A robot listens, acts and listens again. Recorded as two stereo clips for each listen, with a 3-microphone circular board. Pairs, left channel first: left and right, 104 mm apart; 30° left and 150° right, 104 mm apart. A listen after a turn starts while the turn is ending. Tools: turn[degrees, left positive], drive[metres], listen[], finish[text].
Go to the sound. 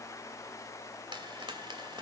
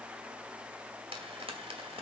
Thought: The frying: 130° right.
Action: turn[-130]
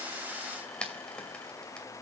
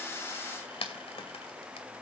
Thought: The frying is now 10° left.
Action: turn[10]
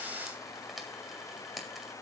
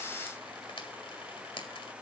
Action: drive[1.0]
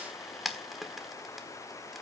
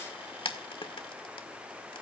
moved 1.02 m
Action: drive[1.0]
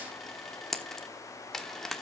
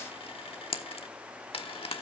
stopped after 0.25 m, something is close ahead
Action: finish[Arrived at the frying, straight ahead.]